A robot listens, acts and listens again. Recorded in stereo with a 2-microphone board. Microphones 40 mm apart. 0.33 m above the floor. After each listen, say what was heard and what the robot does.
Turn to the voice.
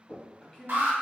The man speaking: about 20° left or 160° left. Turn 20° left.
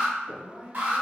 The man speaking: about 20° left or 160° left. Turn 20° left.
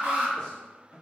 The man speaking: about 30° left or 150° left. Turn 30° left.
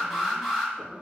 Keep listening.
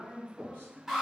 The man speaking: about 30° left or 150° left. Turn 30° left.
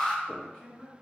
Turn 30° left.
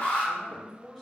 So it is at 10° right. Turn 10° right.
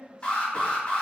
Found it: a man speaking, straight ahead.